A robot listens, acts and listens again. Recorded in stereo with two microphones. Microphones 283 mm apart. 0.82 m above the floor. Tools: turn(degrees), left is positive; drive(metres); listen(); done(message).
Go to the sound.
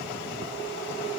listen()
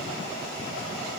listen()
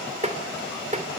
turn(degrees=-25)
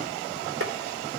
listen()
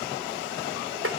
turn(degrees=-130)
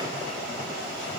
listen()
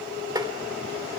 turn(degrees=-15)
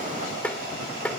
drive(metres=1.0)
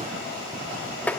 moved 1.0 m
drive(metres=1.0)
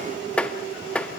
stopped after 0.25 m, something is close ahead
done("Arrived at the tapping, straight ahead.")